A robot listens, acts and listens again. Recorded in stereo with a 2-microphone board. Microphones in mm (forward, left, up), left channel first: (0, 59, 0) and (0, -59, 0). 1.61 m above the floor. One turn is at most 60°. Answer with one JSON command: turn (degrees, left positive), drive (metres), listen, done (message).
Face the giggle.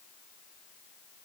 {"listen": true}
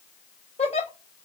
{"turn": 60}
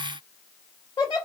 {"turn": 40}
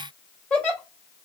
{"turn": 10}
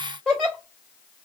{"done": "Facing the giggle."}